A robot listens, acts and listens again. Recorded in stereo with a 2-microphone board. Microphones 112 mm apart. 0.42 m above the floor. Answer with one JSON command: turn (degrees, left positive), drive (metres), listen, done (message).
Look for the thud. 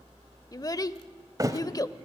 {"turn": -30}
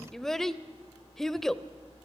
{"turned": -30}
{"listen": true}
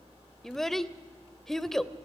{"done": "I heard a thud, but can't make it out now. It was about straight ahead or 120° right."}